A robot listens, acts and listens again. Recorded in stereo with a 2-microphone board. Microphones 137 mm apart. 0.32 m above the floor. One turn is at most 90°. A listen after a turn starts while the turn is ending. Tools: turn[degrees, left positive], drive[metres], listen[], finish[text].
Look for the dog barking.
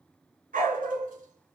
Action: turn[-90]
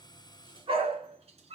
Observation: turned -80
Thought: So it is at 50° right.
Action: turn[-50]
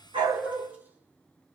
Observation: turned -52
Thought: The dog barking is now 10° right.
Action: turn[-10]
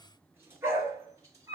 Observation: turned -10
Thought: The dog barking is now 25° right.
Action: turn[-25]
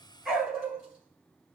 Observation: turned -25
Action: finish[Found it: a dog barking, straight ahead, 2 to 4 m away.]